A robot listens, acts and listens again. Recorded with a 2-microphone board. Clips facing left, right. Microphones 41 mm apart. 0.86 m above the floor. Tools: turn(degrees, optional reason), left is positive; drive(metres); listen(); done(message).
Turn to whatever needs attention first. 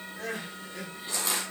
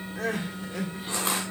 turn(degrees=-90)
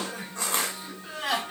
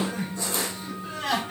turn(degrees=10, reason="So it is at 10° left.")
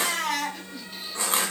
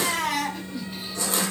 done("Facing the crying, 1 to 2 m away.")